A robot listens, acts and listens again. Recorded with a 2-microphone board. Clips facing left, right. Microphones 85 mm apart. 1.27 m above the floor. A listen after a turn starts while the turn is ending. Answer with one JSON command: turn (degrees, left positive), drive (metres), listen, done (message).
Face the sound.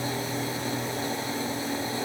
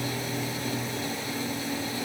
{"listen": true}
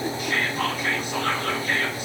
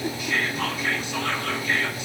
{"turn": 45}
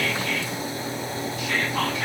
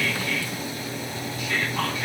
{"turn": 90}
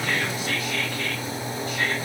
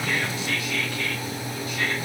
{"turn": 35}
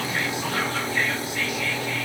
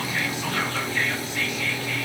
{"turn": 10}
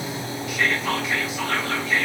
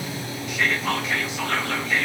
{"done": "Found it: whispering, straight ahead, 1 to 2 m away."}